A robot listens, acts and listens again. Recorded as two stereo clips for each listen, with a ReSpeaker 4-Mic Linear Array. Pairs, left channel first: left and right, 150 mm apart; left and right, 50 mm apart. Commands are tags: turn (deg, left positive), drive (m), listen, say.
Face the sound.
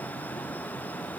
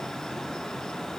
<listen/>
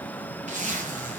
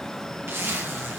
<turn deg="-55"/>
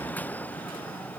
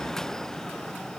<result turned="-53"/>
<listen/>
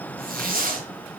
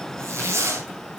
<turn deg="-70"/>
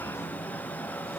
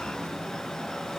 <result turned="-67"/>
<listen/>
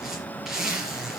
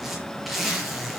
<say>Facing the zipper, over 4 m away.</say>